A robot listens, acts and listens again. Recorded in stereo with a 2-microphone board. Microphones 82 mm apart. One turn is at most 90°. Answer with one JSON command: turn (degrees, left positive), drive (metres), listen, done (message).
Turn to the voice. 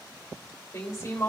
{"turn": 40}
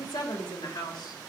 {"turn": 90}
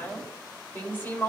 {"turn": 25}
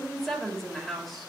{"done": "Found it: a woman speaking, straight ahead."}